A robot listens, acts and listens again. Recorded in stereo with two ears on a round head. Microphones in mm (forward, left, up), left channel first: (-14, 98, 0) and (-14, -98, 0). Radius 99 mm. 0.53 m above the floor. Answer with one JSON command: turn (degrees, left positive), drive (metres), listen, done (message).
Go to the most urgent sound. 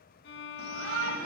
{"turn": -70}
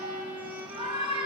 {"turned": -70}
{"turn": -25}
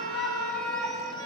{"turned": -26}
{"drive": 1.0}
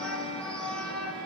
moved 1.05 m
{"drive": 1.0}
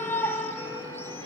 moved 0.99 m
{"turn": 15}
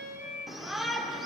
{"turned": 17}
{"drive": 1.0}
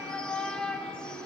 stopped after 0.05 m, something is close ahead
{"done": "Arrived at the shout, straight ahead."}